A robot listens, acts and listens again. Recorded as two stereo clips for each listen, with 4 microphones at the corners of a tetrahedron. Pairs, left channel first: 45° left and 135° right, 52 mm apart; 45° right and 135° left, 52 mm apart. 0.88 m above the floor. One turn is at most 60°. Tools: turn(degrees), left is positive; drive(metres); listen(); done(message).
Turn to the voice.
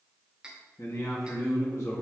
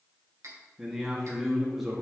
turn(degrees=50)
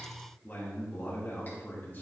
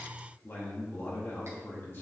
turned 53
done("Facing the man speaking.")